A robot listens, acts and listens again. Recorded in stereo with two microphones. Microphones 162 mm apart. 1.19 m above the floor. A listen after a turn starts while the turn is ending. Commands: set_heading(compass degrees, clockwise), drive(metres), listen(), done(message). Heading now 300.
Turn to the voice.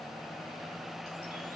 listen()
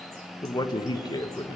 set_heading(275)
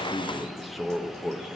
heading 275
done("Facing the man speaking, 1 to 2 m away.")